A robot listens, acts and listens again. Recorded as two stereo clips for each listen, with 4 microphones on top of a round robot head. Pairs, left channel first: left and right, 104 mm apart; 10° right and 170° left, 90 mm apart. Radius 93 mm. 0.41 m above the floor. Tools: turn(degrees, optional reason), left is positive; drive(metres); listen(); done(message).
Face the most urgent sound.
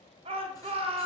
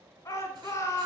turn(degrees=-70, reason="The shout: 70° right.")
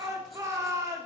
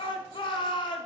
turn(degrees=-30, reason="The shout is now 30° right.")
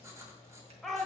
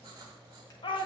done("Facing the shout.")